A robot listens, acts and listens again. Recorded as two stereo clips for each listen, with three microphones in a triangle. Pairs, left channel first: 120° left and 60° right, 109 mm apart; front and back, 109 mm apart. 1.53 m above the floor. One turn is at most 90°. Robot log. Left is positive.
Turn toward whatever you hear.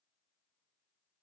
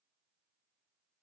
cmd idle
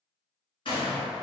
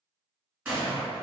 note: The gunshot: 110° left.
cmd yaw +90
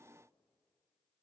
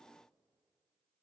note: Nothing new. It was at 20° left.
cmd yaw +20
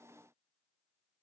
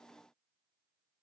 end: Facing where the gunshot came from. I can't hear it now.